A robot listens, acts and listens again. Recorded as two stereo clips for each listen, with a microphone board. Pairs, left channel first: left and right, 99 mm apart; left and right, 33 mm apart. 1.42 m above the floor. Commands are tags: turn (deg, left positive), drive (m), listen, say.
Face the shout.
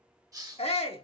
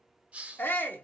<turn deg="90"/>
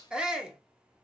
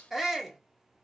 <turn deg="-10"/>
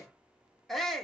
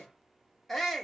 <say>Found it: a shout, straight ahead, 1 to 2 m away.</say>